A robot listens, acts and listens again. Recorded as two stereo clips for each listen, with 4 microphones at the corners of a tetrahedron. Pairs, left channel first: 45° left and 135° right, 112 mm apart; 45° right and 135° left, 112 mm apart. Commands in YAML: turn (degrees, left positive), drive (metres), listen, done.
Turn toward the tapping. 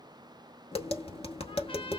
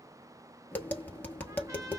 turn: 25
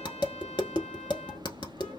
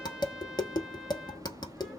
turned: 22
done: "Found it: tapping, straight ahead, 1 to 2 m away."